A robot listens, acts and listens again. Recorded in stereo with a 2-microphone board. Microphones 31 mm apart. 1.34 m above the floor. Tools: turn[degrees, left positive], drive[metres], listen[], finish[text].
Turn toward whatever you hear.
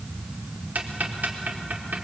Action: turn[-90]
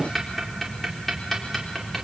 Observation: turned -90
Action: finish[Found it: ticking, straight ahead.]